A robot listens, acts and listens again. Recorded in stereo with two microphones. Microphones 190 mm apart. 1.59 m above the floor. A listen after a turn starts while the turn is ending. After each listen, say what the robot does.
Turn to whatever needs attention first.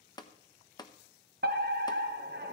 Turn 65° right.
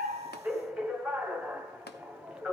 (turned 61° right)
Facing the fire alarm, 1 to 2 m away.